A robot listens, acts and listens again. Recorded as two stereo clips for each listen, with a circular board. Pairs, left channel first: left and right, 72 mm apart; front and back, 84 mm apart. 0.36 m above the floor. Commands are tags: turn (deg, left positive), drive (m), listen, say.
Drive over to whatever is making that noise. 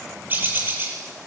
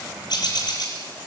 <turn deg="-30"/>
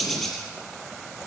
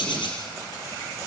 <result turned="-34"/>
<drive m="1.0"/>
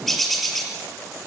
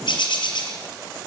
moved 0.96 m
<drive m="1.0"/>
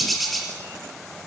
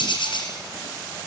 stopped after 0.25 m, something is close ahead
<say>Something is in my way. I am facing the bird but have not reached it.</say>